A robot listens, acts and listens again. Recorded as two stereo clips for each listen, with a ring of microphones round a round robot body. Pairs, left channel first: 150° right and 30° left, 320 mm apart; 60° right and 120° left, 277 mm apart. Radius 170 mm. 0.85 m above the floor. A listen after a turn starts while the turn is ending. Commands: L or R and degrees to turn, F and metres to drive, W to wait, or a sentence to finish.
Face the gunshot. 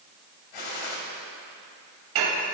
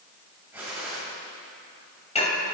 R155
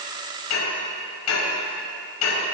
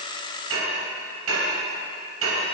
Facing where the gunshot came from. I can't hear it now.